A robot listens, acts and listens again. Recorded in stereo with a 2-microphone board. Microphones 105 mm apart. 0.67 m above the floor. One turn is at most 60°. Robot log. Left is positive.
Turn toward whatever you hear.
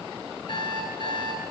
note: The alarm clock: about 50° left or 130° left.
cmd yaw +50
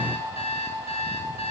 note: So it is at 80° left.
cmd yaw +60
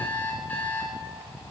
note: The alarm clock is now 15° left.
cmd yaw +15
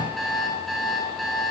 end: Found it: an alarm clock, straight ahead, 2 to 4 m away.